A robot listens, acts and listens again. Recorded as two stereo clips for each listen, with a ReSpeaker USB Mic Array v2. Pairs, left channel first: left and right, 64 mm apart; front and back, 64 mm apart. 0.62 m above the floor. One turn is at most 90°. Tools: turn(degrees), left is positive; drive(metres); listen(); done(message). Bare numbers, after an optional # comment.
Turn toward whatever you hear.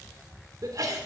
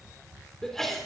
# The sneeze: 85° right.
turn(-85)
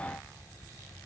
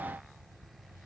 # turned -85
done("I heard a sneeze from this way, but can't make it out now.")